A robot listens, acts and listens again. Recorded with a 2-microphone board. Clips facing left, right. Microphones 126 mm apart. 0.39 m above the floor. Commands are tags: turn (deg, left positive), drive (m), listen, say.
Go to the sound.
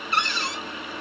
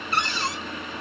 <turn deg="-40"/>
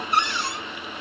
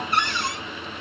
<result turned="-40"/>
<turn deg="-95"/>
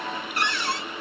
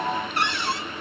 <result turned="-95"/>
<turn deg="-25"/>
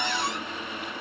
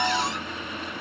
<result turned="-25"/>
<listen/>
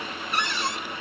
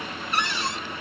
<drive m="1.0"/>
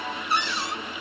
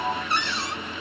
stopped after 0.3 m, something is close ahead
<turn deg="10"/>
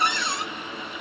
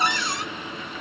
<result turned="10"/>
<say>Something is in my way. I am facing the cupboard door but have not reached it.</say>